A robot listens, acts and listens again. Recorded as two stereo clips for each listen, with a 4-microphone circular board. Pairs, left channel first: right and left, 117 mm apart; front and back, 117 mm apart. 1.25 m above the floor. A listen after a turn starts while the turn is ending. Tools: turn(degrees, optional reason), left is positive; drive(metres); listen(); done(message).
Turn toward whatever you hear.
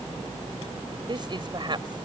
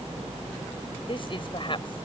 turn(degrees=45, reason="The woman speaking: 45° left.")
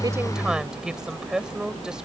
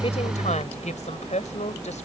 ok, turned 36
done("Facing the woman speaking.")